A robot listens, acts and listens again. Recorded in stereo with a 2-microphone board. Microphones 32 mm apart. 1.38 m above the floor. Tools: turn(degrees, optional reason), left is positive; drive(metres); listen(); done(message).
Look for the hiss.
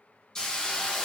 turn(degrees=25, reason="The hiss: about 25° left or 155° left.")
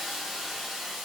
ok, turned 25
done("Found it: a hiss, straight ahead.")